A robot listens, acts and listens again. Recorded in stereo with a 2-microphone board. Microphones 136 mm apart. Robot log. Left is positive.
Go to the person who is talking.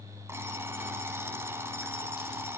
cmd idle
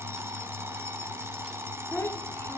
note: The child speaking: about 15° left or 165° left.
cmd yaw +15
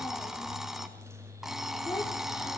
note: So it is at 150° left.
cmd yaw +150
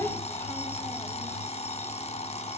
note: The child speaking is now 15° left.
cmd yaw +15
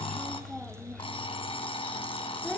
cmd fwd 1.0
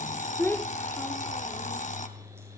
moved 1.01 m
note: The child speaking is now 15° left.
cmd yaw +15
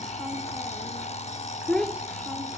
cmd fwd 1.0
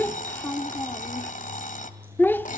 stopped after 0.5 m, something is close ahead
note: The child speaking is now 15° left.
cmd yaw +15
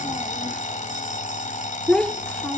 end: I am next to the child speaking.